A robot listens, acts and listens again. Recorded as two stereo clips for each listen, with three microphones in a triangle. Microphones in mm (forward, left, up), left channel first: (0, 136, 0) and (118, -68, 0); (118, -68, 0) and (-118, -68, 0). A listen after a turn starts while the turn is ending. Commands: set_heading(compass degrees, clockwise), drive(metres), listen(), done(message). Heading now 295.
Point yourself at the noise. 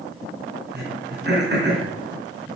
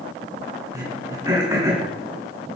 set_heading(40)
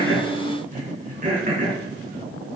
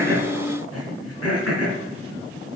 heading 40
done("Found it: throat clearing, straight ahead, 2 to 4 m away.")